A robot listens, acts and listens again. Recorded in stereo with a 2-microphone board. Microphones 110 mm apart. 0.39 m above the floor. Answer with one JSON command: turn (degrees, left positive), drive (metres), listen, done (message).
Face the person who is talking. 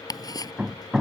{"listen": true}
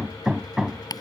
{"listen": true}
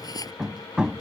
{"done": "I can't make out anyone speaking to turn to."}